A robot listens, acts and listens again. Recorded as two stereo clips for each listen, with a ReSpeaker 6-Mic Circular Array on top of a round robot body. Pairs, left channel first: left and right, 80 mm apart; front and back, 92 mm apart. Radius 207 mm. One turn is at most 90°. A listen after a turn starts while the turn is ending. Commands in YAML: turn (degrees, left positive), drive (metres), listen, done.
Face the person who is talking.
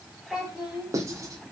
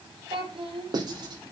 turn: -90
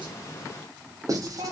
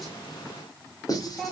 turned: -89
turn: -80
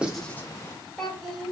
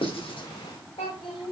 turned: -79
done: "Facing the child speaking, over 4 m away."